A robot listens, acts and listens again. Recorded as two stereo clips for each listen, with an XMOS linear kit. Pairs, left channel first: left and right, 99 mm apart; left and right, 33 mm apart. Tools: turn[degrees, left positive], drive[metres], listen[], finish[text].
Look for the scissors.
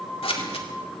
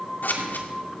Action: turn[90]
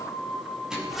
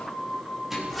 Action: listen[]
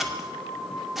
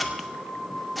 Action: finish[Facing the scissors.]